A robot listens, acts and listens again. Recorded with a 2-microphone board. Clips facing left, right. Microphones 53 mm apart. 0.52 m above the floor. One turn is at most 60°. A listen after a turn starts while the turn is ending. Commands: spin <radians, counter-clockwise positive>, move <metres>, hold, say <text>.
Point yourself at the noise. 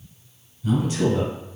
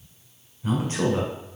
spin -0.79
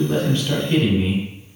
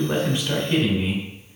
spin -0.17
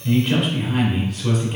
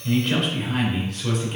say Found it: a man speaking, straight ahead, 1 to 2 m away.